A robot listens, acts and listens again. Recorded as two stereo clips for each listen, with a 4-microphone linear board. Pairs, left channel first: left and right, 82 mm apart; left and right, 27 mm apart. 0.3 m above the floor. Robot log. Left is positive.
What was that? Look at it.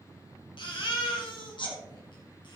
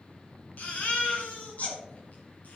note: The baby crying: about 75° left or 105° left.
cmd yaw +75
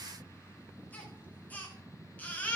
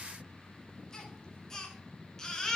note: So it is at 20° left.
cmd yaw +20
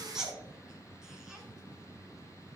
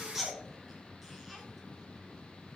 end: Facing the baby crying, 2 to 4 m away.